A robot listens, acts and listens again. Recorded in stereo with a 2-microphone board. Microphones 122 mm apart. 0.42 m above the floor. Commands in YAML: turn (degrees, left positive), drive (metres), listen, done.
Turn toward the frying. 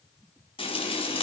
turn: 50
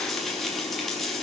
done: "Facing the frying, over 4 m away."